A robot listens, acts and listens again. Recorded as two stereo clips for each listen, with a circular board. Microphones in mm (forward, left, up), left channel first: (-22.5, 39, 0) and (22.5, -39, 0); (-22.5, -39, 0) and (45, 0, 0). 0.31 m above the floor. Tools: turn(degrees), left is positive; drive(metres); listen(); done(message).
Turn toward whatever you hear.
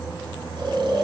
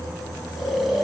turn(degrees=-60)
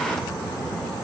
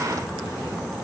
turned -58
listen()
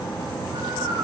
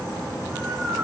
listen()
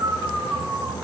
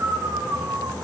done("Facing the snoring, 2 to 4 m away.")